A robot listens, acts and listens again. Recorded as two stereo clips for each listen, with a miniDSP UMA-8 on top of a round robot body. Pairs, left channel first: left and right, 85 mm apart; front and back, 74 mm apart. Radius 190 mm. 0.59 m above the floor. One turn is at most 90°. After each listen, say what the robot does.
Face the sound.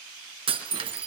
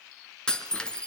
Turn 80° right.
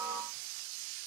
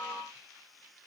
I heard breaking glass from this way, but can't make it out now.